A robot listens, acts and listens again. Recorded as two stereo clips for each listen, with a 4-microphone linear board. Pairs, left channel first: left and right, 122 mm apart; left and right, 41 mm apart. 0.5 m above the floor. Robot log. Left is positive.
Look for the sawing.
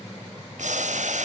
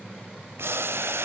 cmd idle
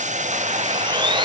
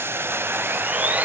note: The sawing: about 40° right or 140° right.
cmd yaw -40
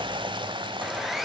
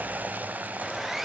end: Facing the sawing.